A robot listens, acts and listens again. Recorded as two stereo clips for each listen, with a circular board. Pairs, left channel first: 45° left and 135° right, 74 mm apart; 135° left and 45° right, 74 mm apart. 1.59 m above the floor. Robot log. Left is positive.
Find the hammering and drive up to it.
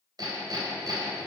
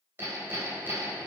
note: The hammering: 105° right.
cmd yaw -105
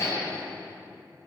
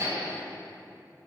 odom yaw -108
cmd fwd 1.0
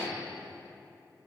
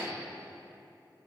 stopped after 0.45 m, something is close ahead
end: Something is in my way. I am facing the hammering but have not reached it.